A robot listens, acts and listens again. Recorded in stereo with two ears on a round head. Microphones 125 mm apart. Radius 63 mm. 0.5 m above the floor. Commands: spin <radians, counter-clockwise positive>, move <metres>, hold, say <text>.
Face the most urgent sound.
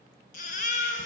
spin 1.05
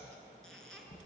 hold
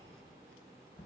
hold
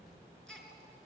say Found it: a baby crying, straight ahead, 2 to 4 m away.